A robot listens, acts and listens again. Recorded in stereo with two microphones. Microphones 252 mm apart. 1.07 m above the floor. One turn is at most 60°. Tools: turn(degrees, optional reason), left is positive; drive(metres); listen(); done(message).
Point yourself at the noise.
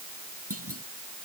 turn(degrees=-60, reason="The clunk: about 65° right or 115° right.")
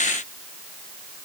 listen()
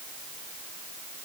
done("I heard a clunk, but can't make it out now. It was about 5° right or 55° right.")